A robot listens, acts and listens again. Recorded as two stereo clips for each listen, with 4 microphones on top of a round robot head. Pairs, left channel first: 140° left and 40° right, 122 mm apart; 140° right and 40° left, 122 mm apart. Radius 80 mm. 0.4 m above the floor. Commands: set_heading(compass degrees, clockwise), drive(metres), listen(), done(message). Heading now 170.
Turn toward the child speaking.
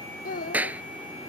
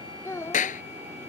set_heading(20)
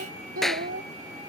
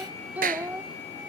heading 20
set_heading(55)
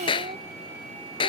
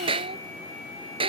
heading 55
listen()
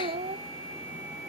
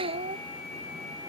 done("Found it: a child speaking, straight ahead.")